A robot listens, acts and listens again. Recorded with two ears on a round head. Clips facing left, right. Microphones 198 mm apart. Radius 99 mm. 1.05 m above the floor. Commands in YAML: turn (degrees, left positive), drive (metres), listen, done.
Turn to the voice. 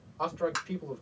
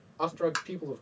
turn: -55
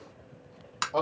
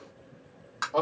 done: "Facing the man speaking, 1 to 2 m away."